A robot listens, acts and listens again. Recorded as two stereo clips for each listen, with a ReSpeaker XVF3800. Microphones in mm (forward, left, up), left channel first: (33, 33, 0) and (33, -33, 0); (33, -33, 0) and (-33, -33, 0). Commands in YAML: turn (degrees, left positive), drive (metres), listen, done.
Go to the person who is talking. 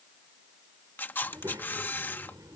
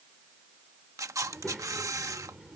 turn: -90
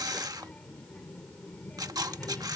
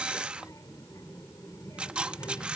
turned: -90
turn: 15
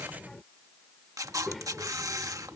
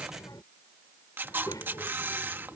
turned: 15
drive: 1.0
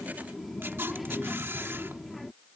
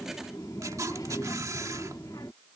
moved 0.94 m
drive: 1.0
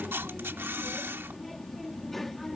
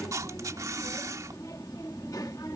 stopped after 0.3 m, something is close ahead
done: "I am next to the child speaking."